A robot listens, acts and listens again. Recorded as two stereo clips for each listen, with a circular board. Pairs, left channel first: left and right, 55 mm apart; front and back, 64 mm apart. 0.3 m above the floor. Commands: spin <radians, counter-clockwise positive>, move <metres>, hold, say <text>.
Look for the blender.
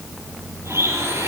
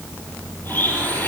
spin -1.05
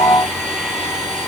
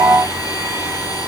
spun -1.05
spin -0.26
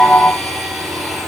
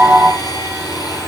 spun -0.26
say Found it: a blender, straight ahead, over 4 m away.